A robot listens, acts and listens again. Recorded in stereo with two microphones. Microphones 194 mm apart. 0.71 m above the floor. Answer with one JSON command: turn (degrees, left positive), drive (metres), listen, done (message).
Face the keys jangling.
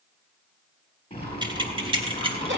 {"turn": -30}
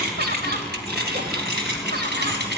{"turn": -120}
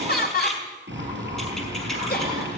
{"listen": true}
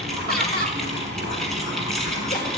{"listen": true}
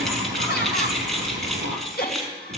{"done": "Facing the keys jangling, over 4 m away."}